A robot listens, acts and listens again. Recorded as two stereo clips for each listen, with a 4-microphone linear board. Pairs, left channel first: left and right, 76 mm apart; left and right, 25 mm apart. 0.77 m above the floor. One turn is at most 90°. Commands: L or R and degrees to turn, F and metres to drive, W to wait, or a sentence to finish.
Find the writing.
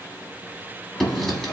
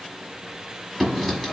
L30
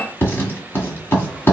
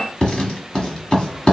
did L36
L90
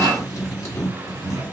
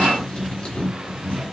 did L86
L55
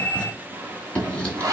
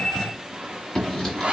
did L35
L20
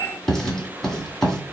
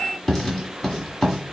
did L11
L10
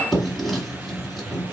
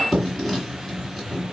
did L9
Found it: writing, straight ahead.